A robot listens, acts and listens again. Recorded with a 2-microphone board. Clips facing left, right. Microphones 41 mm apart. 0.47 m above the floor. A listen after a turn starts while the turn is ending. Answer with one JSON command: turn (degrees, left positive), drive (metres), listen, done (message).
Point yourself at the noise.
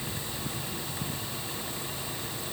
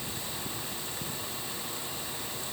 {"listen": true}
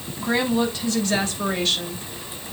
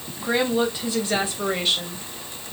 {"turn": -15}
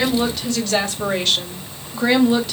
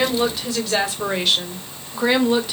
{"turn": -30}
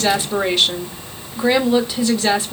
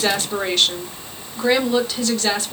{"turn": 10}
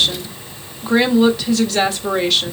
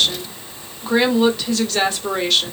{"done": "Facing the woman speaking."}